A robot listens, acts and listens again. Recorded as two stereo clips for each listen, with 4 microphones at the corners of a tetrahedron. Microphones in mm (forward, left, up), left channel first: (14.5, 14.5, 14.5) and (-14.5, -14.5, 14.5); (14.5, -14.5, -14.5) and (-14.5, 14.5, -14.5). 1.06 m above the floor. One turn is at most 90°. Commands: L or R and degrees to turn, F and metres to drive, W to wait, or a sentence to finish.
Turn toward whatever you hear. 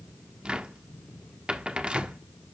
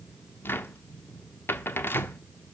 R70
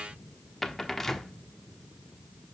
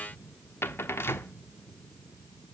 R35
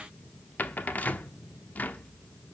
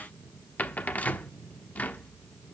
Facing the cupboard door.